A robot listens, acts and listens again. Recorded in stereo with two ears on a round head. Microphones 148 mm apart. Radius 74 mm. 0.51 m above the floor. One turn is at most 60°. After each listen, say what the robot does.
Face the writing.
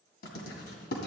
Turn 60° left.
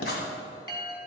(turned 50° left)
Turn 60° left.
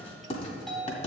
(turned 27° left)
Turn 40° left.
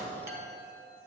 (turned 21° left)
Turn 15° left.
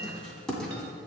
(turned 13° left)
Found it: writing, straight ahead.